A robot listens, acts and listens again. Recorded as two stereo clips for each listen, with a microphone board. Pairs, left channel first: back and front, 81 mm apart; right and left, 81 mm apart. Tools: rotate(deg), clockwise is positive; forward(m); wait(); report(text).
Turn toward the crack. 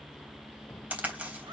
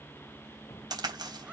rotate(-70)
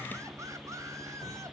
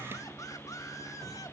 report("Facing where the crack came from. I can't hear it now.")